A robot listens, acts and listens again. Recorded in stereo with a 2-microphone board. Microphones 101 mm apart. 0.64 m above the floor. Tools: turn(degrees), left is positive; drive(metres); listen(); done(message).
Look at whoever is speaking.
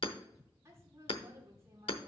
turn(degrees=-30)
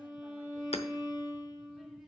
listen()
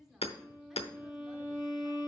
listen()
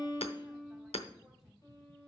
done("I heard a woman speaking, but can't make it out now. It was about straight ahead or 120° right.")